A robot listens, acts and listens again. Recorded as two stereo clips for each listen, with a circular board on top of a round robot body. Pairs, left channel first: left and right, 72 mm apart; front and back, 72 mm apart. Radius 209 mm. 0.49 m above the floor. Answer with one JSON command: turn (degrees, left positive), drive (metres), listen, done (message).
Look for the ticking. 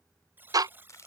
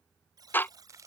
{"turn": -60}
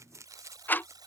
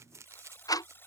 {"turn": 30}
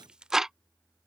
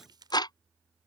{"done": "Facing the ticking."}